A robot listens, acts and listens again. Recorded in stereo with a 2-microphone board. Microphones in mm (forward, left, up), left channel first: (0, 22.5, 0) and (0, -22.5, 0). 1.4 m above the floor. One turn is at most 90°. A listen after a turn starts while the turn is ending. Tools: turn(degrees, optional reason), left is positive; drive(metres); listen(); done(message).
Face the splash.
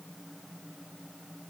listen()
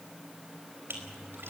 turn(degrees=-65, reason="The splash: about 65° right or 115° right.")
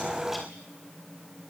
listen()
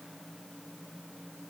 done("I heard a splash, but can't make it out now. It was about straight ahead or 50° right.")